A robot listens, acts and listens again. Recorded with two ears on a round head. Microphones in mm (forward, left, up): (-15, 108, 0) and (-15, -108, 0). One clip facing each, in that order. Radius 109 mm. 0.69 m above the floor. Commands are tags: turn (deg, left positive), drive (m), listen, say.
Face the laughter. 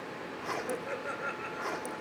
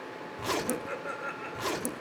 <turn deg="30"/>
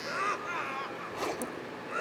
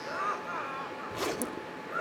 <turn deg="135"/>
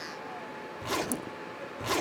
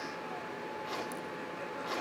<listen/>
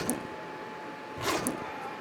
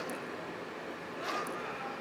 <listen/>
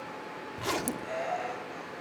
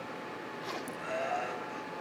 <turn deg="-10"/>
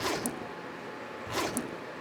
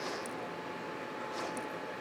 <listen/>
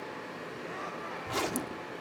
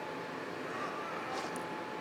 <listen/>
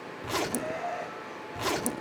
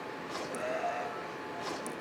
<say>Facing the laughter.</say>